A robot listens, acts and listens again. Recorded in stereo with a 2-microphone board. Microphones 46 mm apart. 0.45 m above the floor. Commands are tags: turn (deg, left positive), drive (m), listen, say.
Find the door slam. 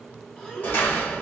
<turn deg="45"/>
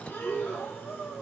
<listen/>
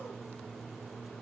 <say>I heard a door slam, but can't make it out now. It was about straight ahead or 90° left.</say>